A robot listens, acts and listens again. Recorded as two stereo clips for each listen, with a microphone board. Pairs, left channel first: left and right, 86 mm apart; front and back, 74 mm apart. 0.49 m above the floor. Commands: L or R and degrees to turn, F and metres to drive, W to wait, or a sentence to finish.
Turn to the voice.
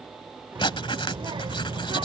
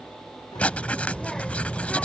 R85
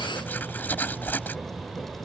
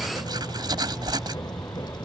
Found it: a child speaking, straight ahead.